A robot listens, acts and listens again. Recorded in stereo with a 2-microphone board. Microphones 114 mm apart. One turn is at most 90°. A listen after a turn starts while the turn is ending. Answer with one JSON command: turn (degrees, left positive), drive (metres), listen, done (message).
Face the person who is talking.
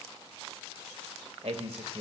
{"turn": -70}
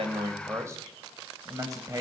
{"turn": -35}
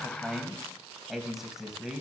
{"done": "Found it: a man speaking, straight ahead."}